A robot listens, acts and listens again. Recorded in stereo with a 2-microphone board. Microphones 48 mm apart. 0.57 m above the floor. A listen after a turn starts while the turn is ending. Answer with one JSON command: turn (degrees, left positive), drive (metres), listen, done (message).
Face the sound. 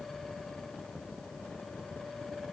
{"listen": true}
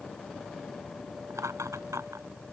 {"turn": -90}
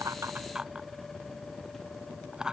{"turn": -15}
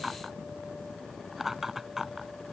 {"done": "Facing the laughter."}